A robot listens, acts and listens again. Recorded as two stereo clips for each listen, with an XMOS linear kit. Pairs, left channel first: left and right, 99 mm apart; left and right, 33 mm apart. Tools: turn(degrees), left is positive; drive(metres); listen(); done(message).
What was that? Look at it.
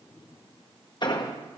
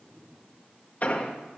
turn(degrees=45)
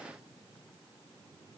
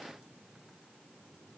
listen()
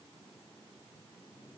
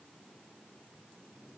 done("I heard an explosion, but can't make it out now. It was about straight ahead or 90° left.")